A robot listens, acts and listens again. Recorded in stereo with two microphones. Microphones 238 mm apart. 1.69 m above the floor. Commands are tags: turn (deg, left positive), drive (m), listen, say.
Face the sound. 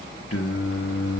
<turn deg="90"/>
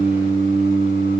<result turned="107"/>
<turn deg="-40"/>
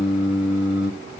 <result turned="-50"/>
<say>Facing the singing, 1 to 2 m away.</say>